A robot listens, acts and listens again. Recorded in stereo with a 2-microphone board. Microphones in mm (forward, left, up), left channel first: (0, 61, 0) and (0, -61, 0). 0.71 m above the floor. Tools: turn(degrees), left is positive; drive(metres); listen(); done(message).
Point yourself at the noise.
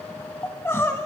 turn(degrees=20)
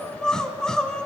done("Facing the crying, under 1 m away.")